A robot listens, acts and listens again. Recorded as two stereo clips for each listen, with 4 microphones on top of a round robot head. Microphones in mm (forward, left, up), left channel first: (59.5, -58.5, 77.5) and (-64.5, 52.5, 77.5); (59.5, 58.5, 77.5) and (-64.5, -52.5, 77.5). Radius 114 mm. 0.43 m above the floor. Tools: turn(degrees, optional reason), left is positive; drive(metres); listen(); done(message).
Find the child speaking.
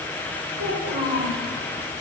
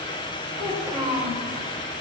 turn(degrees=150, reason="The child speaking: 150° left.")
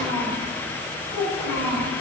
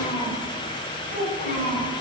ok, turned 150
turn(degrees=25, reason="The child speaking is now 25° left.")
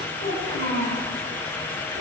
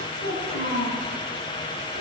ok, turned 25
done("Facing the child speaking, over 4 m away.")